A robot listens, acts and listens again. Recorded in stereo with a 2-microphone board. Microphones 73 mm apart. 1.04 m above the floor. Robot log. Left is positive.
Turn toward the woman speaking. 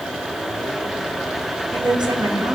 cmd yaw -90
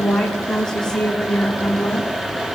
note: So it is at 15° left.
cmd yaw +15
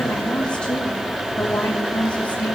note: The woman speaking is now 20° left.
cmd yaw +20
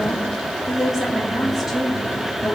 end: Facing the woman speaking, 2 to 4 m away.